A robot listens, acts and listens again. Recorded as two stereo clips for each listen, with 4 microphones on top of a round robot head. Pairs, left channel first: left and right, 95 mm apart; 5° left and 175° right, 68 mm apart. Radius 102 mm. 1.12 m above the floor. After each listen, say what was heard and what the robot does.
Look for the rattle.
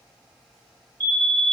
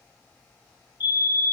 Keep listening.
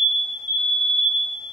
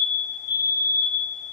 Keep listening.
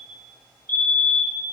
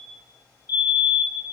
I can't make out a rattle, only a fire alarm.